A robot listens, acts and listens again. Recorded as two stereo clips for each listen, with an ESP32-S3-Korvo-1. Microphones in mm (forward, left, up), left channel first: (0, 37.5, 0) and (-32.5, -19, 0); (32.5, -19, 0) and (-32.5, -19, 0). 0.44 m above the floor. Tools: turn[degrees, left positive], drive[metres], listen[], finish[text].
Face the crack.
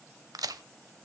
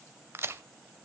Thought: The crack: 130° right.
Action: turn[-130]
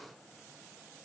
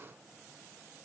Action: finish[Facing where the crack came from. I can't hear it now.]